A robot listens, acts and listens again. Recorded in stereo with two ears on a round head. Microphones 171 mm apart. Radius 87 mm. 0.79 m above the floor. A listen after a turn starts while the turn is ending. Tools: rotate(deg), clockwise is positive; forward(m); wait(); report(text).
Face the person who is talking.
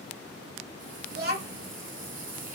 rotate(50)
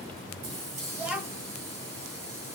report("Found it: a child speaking, straight ahead, 1 to 2 m away.")